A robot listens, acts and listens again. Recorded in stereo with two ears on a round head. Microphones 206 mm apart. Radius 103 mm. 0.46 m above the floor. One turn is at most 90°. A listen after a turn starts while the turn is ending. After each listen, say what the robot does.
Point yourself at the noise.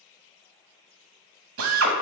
Turn 65° right.
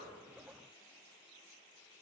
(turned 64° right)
Keep listening.
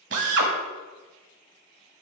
Turn 55° right.
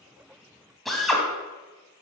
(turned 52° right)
Facing the drill.